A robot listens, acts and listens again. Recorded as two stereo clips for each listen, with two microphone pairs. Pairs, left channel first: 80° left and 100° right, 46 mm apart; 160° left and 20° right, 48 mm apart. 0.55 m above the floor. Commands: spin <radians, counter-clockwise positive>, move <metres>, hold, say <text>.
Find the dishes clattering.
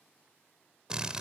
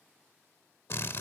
hold
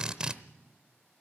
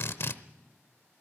hold
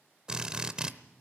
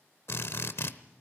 say I can't make out dishes clattering to turn to.